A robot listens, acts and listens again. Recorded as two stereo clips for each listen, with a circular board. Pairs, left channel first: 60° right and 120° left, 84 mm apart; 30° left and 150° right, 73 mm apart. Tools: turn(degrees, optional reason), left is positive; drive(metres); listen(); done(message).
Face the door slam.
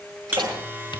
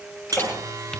turn(degrees=90, reason="The door slam: 90° left.")
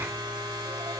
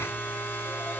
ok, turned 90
done("Facing where the door slam came from. I can't hear it now.")